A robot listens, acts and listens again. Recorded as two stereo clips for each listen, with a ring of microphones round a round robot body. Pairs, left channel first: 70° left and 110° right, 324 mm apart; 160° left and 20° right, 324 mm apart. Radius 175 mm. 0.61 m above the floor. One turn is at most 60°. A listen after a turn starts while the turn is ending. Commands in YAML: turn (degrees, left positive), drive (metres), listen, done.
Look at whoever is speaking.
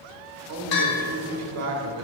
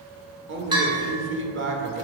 turn: -60
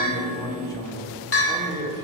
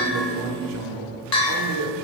turn: -10
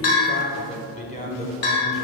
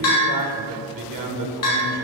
done: "Found it: a man speaking, straight ahead."